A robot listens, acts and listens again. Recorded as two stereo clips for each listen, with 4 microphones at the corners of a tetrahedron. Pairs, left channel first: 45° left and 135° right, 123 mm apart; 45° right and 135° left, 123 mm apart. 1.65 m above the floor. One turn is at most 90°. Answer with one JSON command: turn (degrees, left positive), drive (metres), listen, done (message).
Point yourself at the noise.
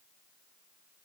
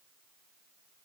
{"listen": true}
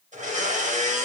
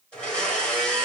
{"turn": -90}
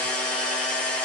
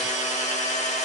{"turn": -35}
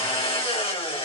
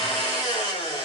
{"done": "Facing the blender, 1 to 2 m away."}